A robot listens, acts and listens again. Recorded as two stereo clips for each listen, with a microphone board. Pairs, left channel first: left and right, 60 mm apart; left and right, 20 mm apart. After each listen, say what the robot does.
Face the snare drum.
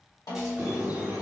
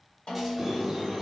Turn 90° left.
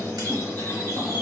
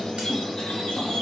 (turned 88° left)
Keep listening.
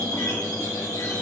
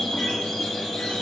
Keep listening.
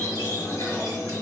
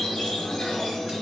Facing where the snare drum came from. I can't hear it now.